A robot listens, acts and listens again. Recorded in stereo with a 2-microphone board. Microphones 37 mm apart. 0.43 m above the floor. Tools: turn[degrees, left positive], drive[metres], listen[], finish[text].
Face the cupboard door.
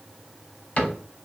Thought: The cupboard door: about 45° left or 135° left.
Action: turn[45]
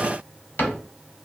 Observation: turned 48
Thought: So it is at 85° left.
Action: turn[85]
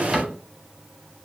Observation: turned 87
Action: finish[Facing the cupboard door, under 1 m away.]